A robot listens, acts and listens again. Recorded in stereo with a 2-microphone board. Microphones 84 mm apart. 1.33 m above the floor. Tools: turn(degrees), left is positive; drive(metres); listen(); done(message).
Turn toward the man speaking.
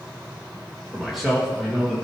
turn(degrees=30)
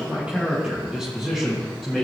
turn(degrees=30)
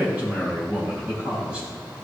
turn(degrees=-15)
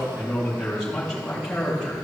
turn(degrees=10)
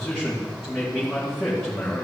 done("Found it: a man speaking, straight ahead, 2 to 4 m away.")